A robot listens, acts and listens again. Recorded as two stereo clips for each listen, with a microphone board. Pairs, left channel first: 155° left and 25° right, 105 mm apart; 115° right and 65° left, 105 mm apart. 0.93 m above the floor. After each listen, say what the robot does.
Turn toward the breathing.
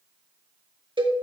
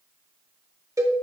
Keep listening.
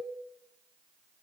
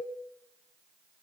Keep listening.
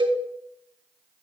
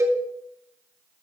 I can't make out breathing to turn to.